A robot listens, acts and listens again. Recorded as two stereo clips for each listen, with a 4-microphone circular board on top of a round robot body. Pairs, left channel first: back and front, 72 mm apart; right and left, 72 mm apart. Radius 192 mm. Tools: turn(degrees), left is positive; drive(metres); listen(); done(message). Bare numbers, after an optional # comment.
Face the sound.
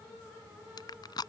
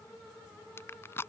# The crushing: 150° right.
turn(-150)
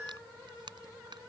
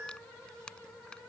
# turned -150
# The crushing is now 15° right.
turn(-15)
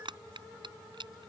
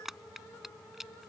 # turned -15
done("Found it: crushing, straight ahead.")